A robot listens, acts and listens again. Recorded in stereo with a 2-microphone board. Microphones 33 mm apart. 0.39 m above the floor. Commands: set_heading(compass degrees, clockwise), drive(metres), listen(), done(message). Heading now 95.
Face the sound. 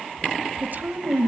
set_heading(150)
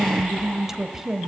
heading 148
set_heading(158)
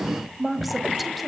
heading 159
done("Found it: a woman speaking, straight ahead.")